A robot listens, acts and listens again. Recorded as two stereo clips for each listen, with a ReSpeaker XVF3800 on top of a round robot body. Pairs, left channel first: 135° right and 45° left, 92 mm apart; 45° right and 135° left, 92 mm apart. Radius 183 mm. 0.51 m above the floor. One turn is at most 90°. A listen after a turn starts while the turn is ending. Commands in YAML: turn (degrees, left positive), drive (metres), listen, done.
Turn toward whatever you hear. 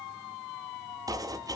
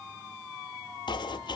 done: "Facing the chopping."